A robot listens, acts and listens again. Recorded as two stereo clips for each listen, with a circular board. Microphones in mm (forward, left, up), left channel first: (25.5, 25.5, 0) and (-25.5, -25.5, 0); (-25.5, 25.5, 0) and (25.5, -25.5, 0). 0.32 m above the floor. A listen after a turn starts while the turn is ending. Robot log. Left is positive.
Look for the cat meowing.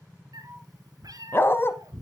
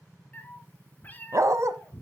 note: The cat meowing: 160° right.
cmd yaw -160
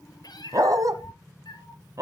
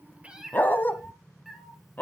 note: The cat meowing is now 40° left.
cmd yaw +40
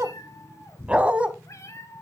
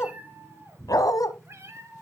end: Found it: a cat meowing, straight ahead.